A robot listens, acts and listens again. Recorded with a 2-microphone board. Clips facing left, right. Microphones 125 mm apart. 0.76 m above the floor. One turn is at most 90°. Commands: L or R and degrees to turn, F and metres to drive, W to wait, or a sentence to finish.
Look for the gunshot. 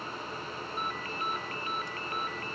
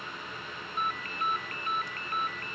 W
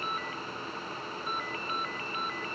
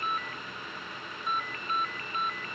W
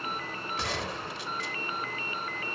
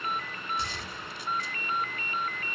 L90
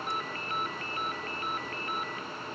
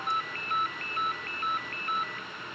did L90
Facing where the gunshot came from. I can't hear it now.